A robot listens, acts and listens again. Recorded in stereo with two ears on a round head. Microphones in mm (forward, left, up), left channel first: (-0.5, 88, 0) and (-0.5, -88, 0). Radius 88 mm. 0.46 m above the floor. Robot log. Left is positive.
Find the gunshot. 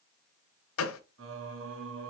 cmd yaw +90
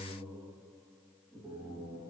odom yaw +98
note: Nothing new. It was at 10° right.
cmd yaw -10
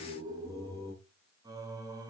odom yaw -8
end: I heard a gunshot from this way, but can't make it out now.